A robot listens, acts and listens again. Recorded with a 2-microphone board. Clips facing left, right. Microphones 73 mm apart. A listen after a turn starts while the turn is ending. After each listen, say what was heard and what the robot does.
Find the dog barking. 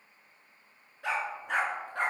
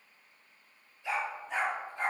Turn 90° left.
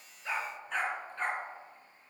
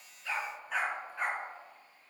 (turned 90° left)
So it is at 10° right. Turn 10° right.
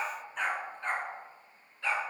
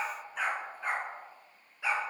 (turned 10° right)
The dog barking is now 15° right. Turn 15° right.
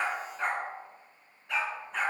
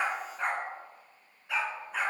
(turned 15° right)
Facing the dog barking.